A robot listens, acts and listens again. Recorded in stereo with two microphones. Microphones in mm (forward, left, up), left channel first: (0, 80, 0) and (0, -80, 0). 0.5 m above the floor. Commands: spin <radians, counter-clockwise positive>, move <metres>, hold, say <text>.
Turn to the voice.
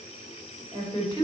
spin 0.52
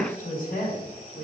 spin 2.09
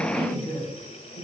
spin -1.05
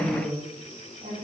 spin -0.61
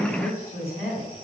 spin 0.26
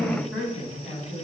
say Facing the woman speaking.